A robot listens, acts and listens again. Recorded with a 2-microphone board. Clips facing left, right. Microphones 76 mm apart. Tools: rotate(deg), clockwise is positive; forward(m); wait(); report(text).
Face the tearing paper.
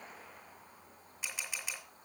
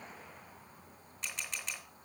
wait()
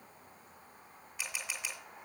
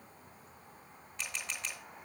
wait()
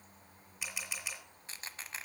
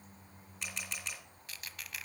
rotate(-30)
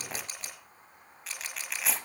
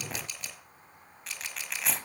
report("Found it: tearing paper, straight ahead, under 1 m away.")